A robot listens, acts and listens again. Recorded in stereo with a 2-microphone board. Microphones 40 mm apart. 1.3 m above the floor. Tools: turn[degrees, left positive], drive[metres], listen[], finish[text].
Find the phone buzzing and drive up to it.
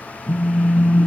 Thought: The phone buzzing: about 35° right or 145° right.
Action: turn[-35]
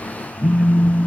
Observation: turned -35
Thought: So it is at 105° right.
Action: turn[-105]
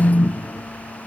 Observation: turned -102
Action: drive[1.0]
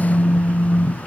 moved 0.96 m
Action: drive[1.0]
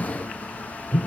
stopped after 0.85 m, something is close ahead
Thought: The phone buzzing is now 20° right.
Action: turn[-20]
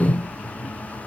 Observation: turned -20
Action: finish[I am next to the phone buzzing.]